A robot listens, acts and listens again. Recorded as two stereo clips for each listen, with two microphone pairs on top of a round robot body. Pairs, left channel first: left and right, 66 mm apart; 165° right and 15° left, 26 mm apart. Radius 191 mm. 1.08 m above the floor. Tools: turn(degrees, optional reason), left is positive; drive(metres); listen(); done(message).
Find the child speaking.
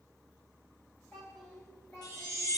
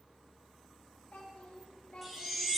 turn(degrees=145, reason="The child speaking: 145° left.")
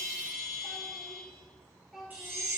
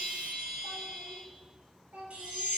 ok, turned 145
done("Facing the child speaking.")